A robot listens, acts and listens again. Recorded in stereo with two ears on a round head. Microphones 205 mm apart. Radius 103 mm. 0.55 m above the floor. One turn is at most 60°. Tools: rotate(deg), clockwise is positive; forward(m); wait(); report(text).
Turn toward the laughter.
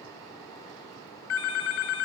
wait()
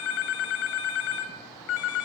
wait()
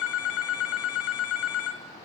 report("I can't make out laughter, only a phone ringing.")